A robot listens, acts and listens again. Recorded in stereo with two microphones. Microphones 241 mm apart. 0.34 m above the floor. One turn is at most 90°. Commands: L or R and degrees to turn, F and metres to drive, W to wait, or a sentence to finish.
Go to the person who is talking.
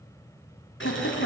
L65
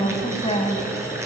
L30
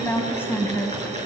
L10
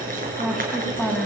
F1.0
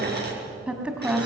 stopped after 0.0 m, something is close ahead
Blocked. The woman speaking is further on, straight ahead.